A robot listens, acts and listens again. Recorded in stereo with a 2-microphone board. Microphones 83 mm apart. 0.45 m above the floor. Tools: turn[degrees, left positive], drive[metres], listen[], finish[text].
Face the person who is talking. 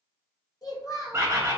Thought: The child speaking: about 55° left or 125° left.
Action: turn[55]
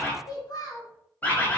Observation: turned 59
Thought: So it is at 60° left.
Action: turn[60]
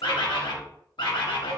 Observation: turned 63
Action: listen[]
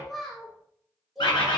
Action: finish[Facing the child speaking.]